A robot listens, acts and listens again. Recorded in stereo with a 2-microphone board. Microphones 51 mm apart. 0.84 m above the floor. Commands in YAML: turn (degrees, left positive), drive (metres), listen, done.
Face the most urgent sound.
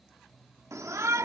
turn: -75
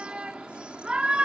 turn: -20
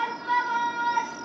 done: "Found it: a shout, straight ahead."